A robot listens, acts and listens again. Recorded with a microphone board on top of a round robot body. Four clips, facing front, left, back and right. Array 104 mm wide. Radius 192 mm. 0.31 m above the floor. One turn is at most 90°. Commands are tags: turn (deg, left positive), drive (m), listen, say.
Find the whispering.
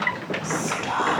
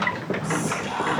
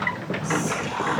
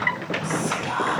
<turn deg="-35"/>
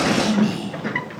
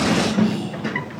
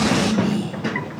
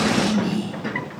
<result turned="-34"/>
<say>Found it: whispering, straight ahead.</say>